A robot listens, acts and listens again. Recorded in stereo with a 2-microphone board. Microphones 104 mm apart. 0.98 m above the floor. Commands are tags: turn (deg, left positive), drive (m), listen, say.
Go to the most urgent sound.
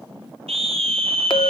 <turn deg="-90"/>
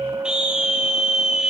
<turn deg="-10"/>
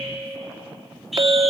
<drive m="1.0"/>
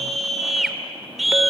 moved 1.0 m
<drive m="1.0"/>
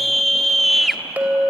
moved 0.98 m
<drive m="1.0"/>
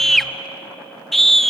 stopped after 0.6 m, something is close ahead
<say>Arrived at the scream, straight ahead.</say>